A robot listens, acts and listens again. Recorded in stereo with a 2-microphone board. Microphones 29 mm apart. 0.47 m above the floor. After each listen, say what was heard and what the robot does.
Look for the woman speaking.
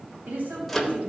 The woman speaking: about 70° right or 110° right. Turn 70° right.
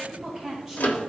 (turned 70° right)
So it is at 10° right. Turn 10° right.
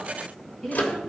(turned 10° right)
The woman speaking is now 10° left. Turn 10° left.
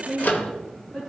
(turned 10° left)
Facing the woman speaking, 2 to 4 m away.